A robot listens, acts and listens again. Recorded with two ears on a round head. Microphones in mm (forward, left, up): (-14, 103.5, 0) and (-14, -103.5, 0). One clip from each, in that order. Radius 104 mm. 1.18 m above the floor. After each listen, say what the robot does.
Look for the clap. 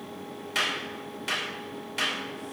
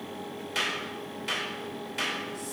Turn 30° left.
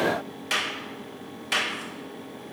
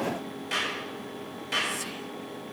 Turn 135° left.
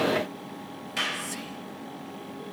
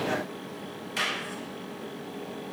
Turn 10° right.
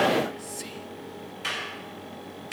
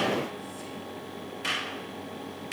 Found it: a clap, straight ahead.